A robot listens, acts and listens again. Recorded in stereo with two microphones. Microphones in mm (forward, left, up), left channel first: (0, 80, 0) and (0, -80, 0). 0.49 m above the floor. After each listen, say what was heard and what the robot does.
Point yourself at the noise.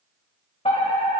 The fire alarm: about 40° left or 140° left. Turn 40° left.
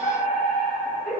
So it is at 95° left. Turn 95° left.
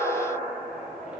The fire alarm is now 10° right. Turn 10° right.
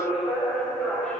Facing the fire alarm, 2 to 4 m away.